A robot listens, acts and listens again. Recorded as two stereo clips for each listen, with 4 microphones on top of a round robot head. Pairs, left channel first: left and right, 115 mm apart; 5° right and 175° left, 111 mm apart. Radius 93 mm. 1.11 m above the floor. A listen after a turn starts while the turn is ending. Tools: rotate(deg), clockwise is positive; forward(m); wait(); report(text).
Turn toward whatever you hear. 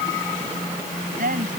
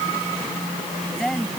rotate(95)
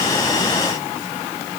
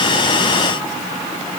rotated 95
wait()
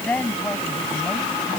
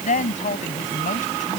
report("Found it: a woman speaking, straight ahead.")